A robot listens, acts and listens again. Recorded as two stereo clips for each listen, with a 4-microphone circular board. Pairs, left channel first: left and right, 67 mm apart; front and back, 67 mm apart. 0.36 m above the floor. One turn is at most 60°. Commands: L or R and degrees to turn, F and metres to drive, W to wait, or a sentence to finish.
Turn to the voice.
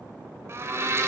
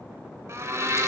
W
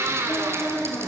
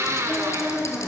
L60
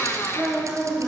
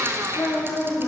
Found it: a woman speaking, straight ahead.